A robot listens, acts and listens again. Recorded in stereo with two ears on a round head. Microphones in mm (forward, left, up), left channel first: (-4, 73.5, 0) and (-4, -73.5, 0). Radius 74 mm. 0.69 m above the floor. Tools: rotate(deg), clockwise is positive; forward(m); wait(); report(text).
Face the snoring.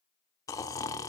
rotate(-20)
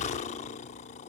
rotate(-135)
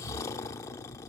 rotate(-20)
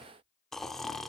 report("Facing the snoring.")